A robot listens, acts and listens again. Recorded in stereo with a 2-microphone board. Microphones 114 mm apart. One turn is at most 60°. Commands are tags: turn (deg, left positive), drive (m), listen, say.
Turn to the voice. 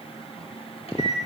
<listen/>
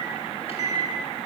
<listen/>
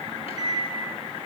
<say>I can't make out anyone speaking to turn to.</say>